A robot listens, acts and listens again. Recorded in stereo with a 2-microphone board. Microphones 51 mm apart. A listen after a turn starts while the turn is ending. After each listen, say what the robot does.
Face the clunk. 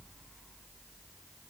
Keep listening.
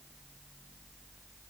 Keep listening.
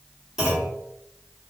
Turn 30° right.
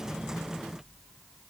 Keep listening.
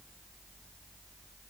I heard a clunk, but can't make it out now. It was about 20° left or 140° right.